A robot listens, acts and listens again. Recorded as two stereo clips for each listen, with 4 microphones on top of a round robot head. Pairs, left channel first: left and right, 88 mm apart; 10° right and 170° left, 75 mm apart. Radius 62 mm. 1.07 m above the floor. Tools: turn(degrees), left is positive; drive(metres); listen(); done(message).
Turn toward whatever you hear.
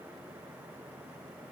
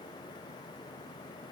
listen()
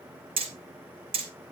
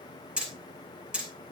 turn(degrees=-110)
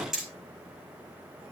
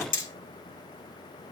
done("Found it: hammering, straight ahead.")